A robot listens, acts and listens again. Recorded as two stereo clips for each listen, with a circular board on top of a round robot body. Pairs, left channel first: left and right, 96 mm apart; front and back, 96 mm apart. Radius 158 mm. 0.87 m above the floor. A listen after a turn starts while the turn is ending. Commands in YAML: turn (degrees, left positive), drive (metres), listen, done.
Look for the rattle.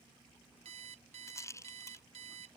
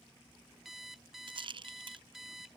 turn: 150
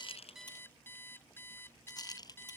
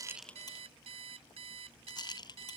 turn: 40
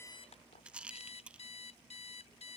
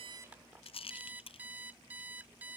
turn: -10
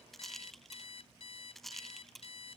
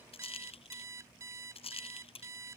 done: "Facing the rattle."